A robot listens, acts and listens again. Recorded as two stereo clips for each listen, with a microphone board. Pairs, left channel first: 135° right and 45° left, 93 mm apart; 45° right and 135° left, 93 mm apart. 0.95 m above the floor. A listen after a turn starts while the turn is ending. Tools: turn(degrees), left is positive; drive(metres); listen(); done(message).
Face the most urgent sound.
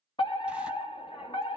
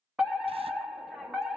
turn(degrees=-140)
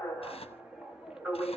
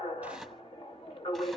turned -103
turn(degrees=-40)
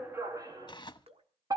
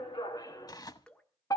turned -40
done("Facing the fire alarm.")